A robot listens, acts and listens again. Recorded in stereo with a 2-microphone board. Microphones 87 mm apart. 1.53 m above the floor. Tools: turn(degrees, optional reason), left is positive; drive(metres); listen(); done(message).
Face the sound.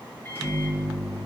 turn(degrees=25, reason="The microwave: about 25° left or 155° left.")
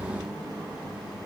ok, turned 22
done("Found it: a microwave, straight ahead, 1 to 2 m away.")